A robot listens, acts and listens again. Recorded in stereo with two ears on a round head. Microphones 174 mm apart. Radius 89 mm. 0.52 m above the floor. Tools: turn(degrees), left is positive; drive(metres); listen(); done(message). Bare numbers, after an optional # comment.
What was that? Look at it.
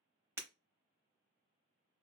turn(-30)
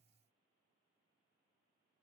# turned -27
listen()
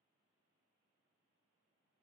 done("I heard breaking glass, but can't make it out now. It was about 15° left or 140° right.")